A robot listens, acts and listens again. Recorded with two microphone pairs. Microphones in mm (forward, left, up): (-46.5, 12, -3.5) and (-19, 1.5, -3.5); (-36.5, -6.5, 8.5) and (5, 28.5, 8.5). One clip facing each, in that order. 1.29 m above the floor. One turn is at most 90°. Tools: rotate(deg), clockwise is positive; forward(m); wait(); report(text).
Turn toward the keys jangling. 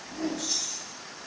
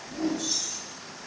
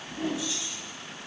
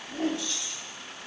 rotate(-90)
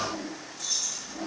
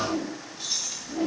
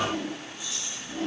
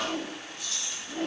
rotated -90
rotate(-30)
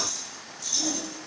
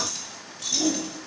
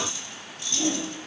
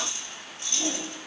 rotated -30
rotate(15)
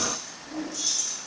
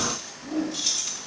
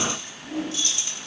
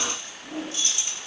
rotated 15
rotate(20)
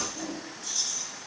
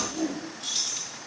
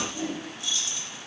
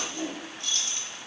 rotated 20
report("Facing the keys jangling.")